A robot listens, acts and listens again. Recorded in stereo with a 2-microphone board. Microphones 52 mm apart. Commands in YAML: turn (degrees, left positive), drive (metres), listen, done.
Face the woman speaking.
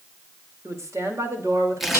turn: -75
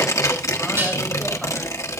listen: true
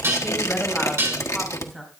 done: "Facing the woman speaking, over 4 m away."